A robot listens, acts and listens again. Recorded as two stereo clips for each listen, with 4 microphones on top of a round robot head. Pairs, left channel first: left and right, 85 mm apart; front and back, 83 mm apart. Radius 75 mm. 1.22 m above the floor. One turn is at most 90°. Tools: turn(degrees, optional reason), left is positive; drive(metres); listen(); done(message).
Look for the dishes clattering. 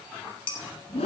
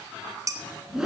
turn(degrees=90, reason="The dishes clattering: 135° left.")
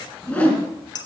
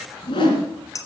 turn(degrees=50, reason="The dishes clattering is now 50° left.")
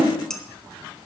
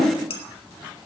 done("Facing the dishes clattering, 1 to 2 m away.")